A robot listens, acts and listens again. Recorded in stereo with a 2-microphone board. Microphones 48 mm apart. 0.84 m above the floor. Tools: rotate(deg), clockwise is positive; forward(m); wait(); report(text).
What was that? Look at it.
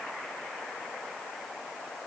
wait()
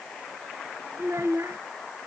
rotate(90)
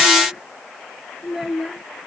report("Found it: a child speaking, straight ahead.")